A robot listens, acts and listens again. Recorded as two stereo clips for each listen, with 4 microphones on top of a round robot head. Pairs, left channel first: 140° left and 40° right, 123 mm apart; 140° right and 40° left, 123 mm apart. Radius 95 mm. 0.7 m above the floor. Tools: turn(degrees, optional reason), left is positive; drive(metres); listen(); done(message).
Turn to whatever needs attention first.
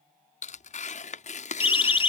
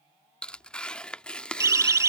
turn(degrees=100, reason="The siren: 100° left.")
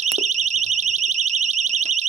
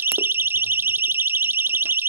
turn(degrees=-35, reason="The siren is now 35° right.")
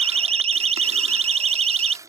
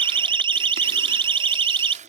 done("Facing the siren.")